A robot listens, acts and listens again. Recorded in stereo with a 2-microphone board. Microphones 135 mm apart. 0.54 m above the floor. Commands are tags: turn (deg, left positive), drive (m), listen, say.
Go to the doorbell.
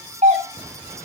<turn deg="-65"/>
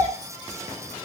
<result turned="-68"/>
<listen/>
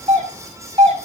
<turn deg="-45"/>
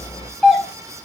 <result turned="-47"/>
<drive m="1.0"/>
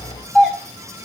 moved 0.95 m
<drive m="1.0"/>
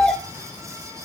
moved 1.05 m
<turn deg="10"/>
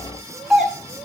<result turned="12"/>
<drive m="1.0"/>
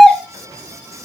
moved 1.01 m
<drive m="1.0"/>
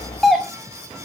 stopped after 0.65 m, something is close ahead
<say>I am next to the doorbell.</say>